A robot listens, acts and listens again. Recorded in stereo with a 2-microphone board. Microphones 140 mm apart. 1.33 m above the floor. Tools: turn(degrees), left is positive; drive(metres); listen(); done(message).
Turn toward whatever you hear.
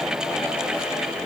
listen()
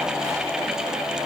listen()
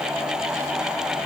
done("I can't make out anything.")